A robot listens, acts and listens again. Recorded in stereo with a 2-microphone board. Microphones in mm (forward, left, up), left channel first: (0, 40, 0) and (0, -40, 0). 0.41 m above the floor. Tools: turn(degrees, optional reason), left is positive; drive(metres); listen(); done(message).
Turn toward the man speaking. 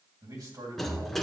turn(degrees=-55, reason="The man speaking: about 55° right or 125° right.")
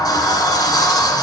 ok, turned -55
listen()
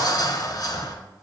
listen()
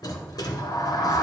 done("I heard a man speaking, but can't make it out now. It was about straight ahead or 70° right.")